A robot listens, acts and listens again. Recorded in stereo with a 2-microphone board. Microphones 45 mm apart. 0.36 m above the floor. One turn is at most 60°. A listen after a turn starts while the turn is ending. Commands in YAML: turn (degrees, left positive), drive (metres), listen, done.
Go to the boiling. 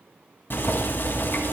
turn: 55
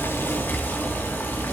turn: 60
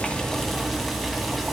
drive: 1.0
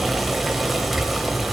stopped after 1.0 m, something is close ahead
done: "I am next to the boiling."